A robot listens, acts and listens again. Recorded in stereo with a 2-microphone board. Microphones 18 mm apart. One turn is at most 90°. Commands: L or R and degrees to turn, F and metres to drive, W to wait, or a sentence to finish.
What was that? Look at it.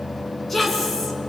L30
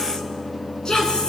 L90
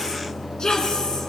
L40
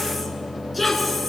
Facing the woman speaking, over 4 m away.